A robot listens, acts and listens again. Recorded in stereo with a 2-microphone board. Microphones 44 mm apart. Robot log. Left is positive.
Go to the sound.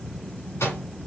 note: The microwave: about 70° left or 110° left.
cmd yaw +70
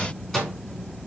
note: So it is at 10° left.
cmd yaw +10
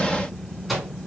cmd fwd 1.0
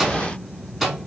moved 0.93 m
cmd fwd 1.0
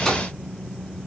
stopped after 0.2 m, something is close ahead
cmd idle
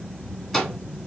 note: The microwave is now 15° left.
cmd yaw +15
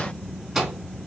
end: I am next to the microwave.